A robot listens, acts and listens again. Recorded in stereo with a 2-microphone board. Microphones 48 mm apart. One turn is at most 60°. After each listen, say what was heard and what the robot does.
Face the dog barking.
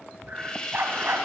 The dog barking: about 60° right or 120° right. Turn 60° right.
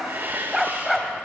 Found it: a dog barking, straight ahead.